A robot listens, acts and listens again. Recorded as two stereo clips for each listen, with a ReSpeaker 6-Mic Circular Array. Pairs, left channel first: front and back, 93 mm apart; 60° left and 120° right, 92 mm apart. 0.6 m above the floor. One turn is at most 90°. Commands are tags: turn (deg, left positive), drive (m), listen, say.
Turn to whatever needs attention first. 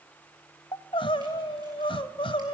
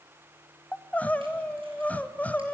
<turn deg="-15"/>
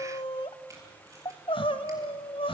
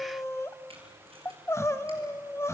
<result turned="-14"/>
<say>Found it: crying, straight ahead.</say>